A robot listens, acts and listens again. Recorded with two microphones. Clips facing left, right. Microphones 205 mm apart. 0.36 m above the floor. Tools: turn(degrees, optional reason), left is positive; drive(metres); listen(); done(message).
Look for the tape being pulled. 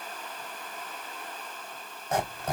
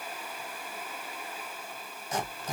listen()
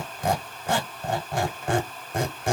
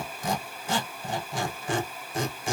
listen()
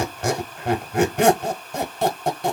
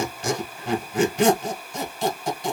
done("I can't make out tape being pulled, only a squeak.")